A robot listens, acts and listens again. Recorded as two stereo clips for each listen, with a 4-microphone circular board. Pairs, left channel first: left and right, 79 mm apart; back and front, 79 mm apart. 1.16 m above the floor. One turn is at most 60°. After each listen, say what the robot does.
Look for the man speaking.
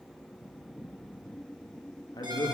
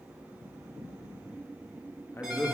Turn 60° left.
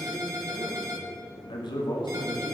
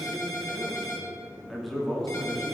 Turn 60° left.
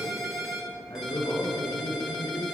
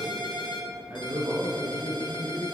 Turn 55° left.
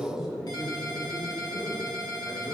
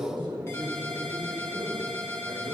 Turn 10° right.
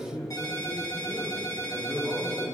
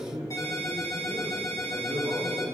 Facing the man speaking, 2 to 4 m away.